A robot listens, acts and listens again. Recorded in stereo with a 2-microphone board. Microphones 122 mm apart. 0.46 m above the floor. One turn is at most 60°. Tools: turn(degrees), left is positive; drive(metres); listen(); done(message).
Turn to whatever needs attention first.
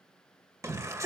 turn(degrees=-25)
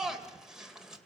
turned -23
done("Facing the shout.")